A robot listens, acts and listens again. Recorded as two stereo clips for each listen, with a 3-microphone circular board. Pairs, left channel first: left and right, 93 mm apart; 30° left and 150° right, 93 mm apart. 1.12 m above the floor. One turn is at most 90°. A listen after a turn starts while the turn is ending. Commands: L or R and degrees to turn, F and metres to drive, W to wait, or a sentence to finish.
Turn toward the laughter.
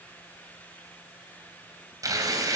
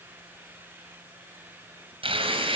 W
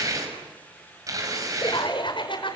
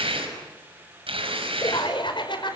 L60
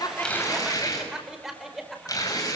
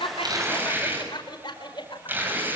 Found it: laughter, straight ahead.